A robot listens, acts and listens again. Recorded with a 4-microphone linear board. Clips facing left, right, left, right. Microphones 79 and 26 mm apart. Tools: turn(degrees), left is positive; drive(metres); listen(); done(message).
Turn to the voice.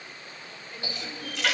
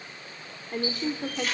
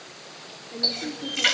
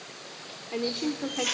turn(degrees=-50)
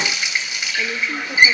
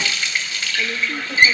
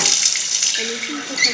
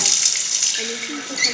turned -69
turn(degrees=10)
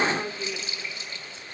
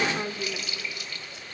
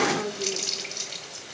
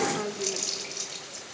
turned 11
done("Facing the woman speaking.")